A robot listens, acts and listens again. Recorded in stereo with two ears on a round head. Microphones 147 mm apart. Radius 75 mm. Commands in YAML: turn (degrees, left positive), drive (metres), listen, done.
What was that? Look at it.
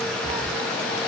turn: 30
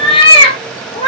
turn: 150
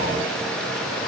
listen: true
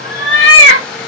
turn: 80
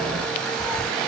turn: 10
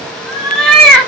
done: "Found it: a cat meowing, straight ahead, 1 to 2 m away."